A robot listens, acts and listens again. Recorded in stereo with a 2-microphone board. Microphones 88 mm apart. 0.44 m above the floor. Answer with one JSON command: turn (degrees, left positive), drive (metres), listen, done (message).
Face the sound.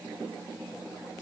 {"listen": true}
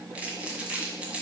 {"turn": -30}
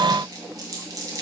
{"turn": -135}
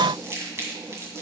{"turn": -30}
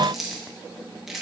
{"done": "Facing the crumpling."}